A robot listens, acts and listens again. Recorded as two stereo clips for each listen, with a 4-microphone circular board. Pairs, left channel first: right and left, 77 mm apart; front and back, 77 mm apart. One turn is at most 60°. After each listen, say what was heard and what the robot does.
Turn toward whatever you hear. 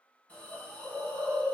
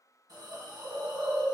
The hiss: 160° right. Turn 60° right.
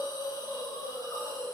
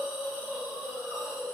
The hiss is now 105° right. Turn 60° right.
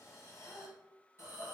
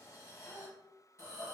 The hiss is now 40° right. Turn 40° right.
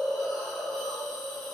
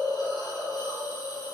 Facing the hiss, under 1 m away.